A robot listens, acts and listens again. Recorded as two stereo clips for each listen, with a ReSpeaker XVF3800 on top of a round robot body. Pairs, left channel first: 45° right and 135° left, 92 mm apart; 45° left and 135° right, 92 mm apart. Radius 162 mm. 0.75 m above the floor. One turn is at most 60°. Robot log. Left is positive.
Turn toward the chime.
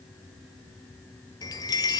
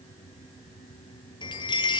end: Found it: a chime, straight ahead.